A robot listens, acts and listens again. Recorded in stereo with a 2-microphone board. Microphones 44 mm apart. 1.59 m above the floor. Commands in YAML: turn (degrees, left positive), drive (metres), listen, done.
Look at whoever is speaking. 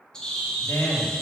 turn: 70
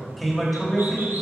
done: "Found it: a man speaking, straight ahead."